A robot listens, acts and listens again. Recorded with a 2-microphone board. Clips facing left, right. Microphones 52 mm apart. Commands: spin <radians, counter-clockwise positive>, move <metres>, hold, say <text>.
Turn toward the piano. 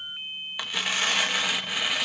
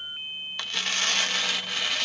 hold
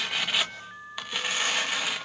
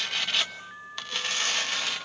hold
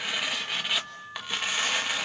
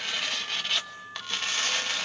say I can't make out a piano to turn to.